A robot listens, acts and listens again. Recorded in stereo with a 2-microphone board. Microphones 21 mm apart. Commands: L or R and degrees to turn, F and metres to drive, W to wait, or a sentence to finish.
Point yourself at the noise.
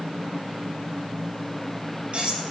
R55
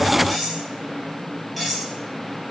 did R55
Found it: cutlery clinking, straight ahead, over 4 m away.